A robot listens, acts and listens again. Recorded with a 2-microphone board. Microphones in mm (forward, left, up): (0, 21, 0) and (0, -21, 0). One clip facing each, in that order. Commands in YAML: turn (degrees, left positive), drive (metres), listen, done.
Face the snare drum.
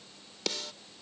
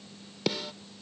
turn: -30
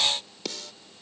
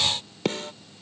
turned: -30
turn: -135
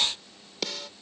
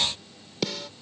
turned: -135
done: "Facing the snare drum."